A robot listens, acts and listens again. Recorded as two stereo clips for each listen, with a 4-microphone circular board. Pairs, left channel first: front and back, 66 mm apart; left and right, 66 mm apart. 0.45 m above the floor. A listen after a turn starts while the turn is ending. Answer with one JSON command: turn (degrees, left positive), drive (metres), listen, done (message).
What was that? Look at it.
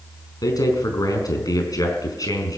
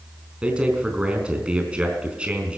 {"turn": -15}
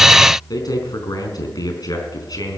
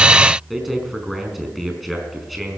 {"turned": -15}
{"done": "Facing the man speaking."}